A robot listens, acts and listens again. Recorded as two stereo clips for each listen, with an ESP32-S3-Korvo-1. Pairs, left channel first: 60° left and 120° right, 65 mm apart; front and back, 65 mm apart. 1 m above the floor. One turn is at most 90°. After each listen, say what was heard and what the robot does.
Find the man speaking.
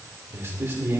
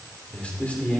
The man speaking: 70° right. Turn 70° right.
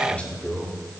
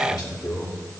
The man speaking is now 10° right. Turn 10° right.
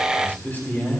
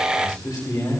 Found it: a man speaking, straight ahead, 2 to 4 m away.